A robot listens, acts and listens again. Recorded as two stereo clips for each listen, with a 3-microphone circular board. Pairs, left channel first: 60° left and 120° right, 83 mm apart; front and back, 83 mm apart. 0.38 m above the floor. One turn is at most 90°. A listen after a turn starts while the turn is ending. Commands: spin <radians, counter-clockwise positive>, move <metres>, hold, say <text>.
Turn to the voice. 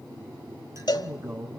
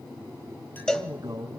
spin -1.57
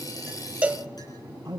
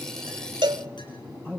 spin -1.22
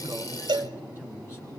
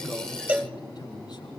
say Facing the man speaking, 2 to 4 m away.